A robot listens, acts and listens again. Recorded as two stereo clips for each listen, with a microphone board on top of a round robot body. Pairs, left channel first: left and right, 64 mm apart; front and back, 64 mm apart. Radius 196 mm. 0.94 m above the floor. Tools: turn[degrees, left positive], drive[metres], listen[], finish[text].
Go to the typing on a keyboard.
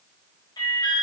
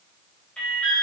Action: listen[]
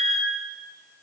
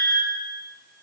Action: listen[]
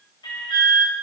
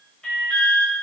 Action: finish[I can't make out typing on a keyboard to turn to.]